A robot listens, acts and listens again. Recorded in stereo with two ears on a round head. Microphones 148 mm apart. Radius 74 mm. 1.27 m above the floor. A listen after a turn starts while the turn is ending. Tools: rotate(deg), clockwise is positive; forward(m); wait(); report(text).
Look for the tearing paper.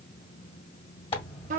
rotate(-35)
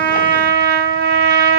wait()
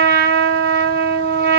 wait()
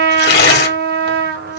rotate(-110)
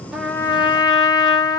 wait()
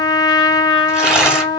report("Found it: tearing paper, straight ahead, 1 to 2 m away.")